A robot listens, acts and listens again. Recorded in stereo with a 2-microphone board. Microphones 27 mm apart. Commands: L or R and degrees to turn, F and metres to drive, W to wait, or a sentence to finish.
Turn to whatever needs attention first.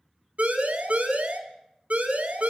R70
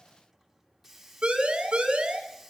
R40
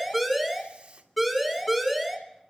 Facing the siren, 2 to 4 m away.